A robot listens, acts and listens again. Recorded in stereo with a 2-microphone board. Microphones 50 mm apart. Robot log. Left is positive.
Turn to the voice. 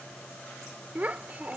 note: The child speaking: about 30° right or 150° right.
cmd yaw -30
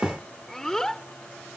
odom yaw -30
note: So it is at 15° left.
cmd yaw +15
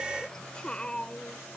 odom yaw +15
note: The child speaking is now 25° left.
cmd yaw +25
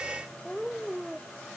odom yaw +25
end: Facing the child speaking.